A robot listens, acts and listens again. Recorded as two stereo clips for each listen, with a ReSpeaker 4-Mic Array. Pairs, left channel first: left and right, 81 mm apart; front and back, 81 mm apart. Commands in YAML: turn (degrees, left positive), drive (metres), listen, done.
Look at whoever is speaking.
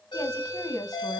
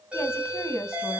turn: 55
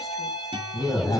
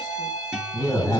listen: true
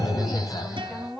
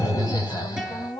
done: "Found it: a woman speaking, straight ahead, 2 to 4 m away."